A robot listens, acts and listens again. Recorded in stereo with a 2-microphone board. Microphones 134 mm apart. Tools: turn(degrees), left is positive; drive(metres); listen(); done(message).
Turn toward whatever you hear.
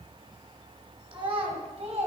turn(degrees=-55)
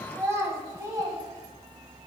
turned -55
turn(degrees=-25)
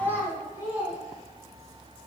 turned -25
turn(degrees=-20)
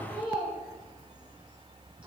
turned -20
turn(degrees=-10)
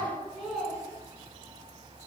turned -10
done("Facing the child speaking.")